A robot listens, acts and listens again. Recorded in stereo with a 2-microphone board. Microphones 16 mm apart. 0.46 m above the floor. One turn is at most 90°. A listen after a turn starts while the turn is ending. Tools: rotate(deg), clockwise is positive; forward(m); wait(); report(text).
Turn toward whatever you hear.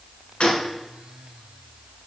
rotate(-90)
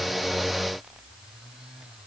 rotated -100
rotate(10)
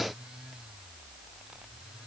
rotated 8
report("I heard a gunshot from this way, but can't make it out now.")